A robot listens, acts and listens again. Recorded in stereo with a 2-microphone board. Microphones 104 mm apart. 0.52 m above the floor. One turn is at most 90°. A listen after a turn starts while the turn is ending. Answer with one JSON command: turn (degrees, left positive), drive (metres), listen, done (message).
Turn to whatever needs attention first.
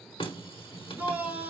{"turn": -30}
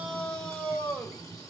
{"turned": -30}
{"turn": 15}
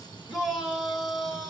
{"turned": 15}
{"done": "Facing the shout."}